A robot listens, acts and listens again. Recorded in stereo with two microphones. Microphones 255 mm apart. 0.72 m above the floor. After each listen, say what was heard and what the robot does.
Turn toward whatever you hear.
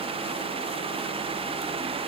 Keep listening.
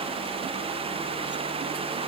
Keep listening.
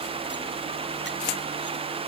I can't make out anything to turn to.